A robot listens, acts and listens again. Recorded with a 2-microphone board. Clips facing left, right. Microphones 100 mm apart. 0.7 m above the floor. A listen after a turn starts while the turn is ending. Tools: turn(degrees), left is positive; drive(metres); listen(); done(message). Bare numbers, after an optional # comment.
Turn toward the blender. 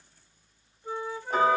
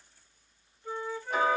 listen()
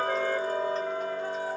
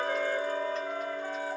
listen()
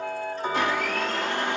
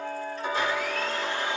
# The blender: about 60° left or 120° left.
turn(60)
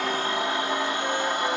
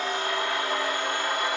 # So it is at 25° left.
turn(25)
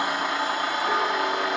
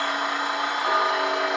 done("Found it: a blender, straight ahead.")